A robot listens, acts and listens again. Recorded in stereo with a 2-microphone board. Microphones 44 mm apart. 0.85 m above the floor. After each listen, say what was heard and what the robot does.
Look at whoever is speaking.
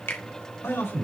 Turn 90° left.
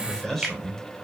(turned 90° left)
So it is at 10° left. Turn 10° left.
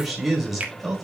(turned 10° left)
Facing the man speaking, 2 to 4 m away.